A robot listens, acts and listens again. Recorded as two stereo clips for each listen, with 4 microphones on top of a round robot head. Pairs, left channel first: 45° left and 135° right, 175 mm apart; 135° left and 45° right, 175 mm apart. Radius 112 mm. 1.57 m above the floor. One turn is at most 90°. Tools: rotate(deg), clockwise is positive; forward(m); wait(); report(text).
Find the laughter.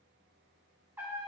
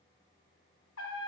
wait()
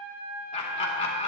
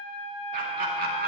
report("Found it: laughter, straight ahead.")